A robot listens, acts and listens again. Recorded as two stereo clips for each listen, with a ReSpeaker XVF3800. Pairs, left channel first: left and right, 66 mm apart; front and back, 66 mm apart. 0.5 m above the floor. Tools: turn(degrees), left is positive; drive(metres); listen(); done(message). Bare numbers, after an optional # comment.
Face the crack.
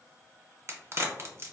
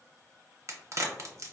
# The crack: 135° right.
turn(-135)
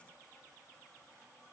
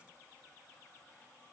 done("Facing where the crack came from. I can't hear it now.")